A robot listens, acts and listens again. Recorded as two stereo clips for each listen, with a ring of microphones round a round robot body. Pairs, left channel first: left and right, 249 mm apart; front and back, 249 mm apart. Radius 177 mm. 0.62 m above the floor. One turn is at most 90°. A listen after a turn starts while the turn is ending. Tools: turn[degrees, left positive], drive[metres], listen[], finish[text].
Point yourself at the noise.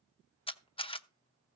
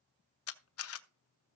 Thought: The camera shutter: 20° left.
Action: turn[20]
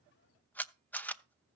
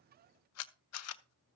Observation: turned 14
Action: finish[Facing the camera shutter, under 1 m away.]